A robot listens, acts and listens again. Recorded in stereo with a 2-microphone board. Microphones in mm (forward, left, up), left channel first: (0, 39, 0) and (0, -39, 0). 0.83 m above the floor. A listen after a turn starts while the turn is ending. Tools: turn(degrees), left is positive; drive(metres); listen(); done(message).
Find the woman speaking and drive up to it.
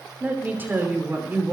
turn(degrees=-25)
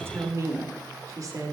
turn(degrees=-130)
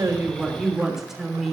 drive(metres=1.0)
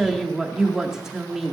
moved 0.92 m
drive(metres=1.0)
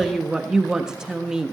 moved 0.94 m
turn(degrees=-10)
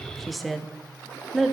drive(metres=1.0)
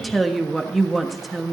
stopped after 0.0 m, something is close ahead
done("I am next to the woman speaking.")